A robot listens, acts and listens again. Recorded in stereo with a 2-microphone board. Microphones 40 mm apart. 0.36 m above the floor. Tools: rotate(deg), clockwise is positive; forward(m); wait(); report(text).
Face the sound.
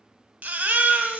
rotate(45)
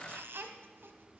wait()
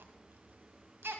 rotate(85)
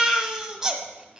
rotate(15)
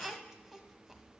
report("Found it: a baby crying, straight ahead.")